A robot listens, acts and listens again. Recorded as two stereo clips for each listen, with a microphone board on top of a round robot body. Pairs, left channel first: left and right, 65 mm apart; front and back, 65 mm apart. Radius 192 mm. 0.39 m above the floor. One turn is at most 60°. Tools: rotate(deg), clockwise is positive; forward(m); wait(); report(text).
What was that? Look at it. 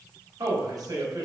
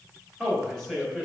rotate(60)
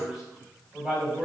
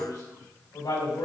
report("Facing the man speaking.")